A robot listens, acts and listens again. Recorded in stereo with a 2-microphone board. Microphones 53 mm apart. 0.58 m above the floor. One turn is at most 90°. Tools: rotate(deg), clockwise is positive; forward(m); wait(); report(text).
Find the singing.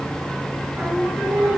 rotate(15)
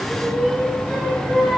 rotate(-30)
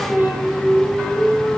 rotate(15)
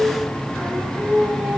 report("Facing the singing, over 4 m away.")